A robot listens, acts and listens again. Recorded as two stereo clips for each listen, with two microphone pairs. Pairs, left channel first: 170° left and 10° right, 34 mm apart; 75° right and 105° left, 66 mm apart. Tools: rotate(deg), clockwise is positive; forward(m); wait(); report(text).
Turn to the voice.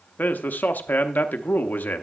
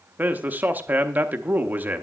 rotate(-160)
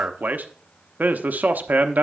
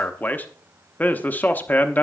rotate(15)
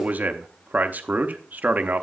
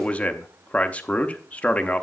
report("Facing the man speaking, under 1 m away.")